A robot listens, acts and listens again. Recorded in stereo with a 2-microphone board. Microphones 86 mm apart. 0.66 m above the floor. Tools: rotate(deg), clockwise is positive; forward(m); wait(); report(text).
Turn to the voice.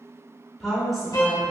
rotate(-30)
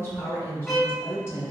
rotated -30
rotate(-150)
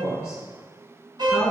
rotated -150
rotate(-40)
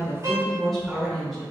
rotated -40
report("Found it: a woman speaking, straight ahead, 1 to 2 m away.")